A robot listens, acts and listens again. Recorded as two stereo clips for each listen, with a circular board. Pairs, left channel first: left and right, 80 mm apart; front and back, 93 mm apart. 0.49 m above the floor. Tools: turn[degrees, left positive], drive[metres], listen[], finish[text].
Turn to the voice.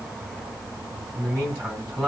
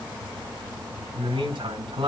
Thought: The man speaking: 170° left.
Action: turn[170]
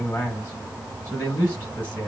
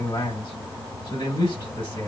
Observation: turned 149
Thought: The man speaking is now 20° left.
Action: turn[20]
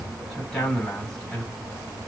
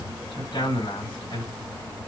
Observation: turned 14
Thought: The man speaking is now 10° left.
Action: turn[10]
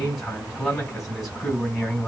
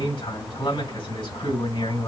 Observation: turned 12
Action: finish[Facing the man speaking, 2 to 4 m away.]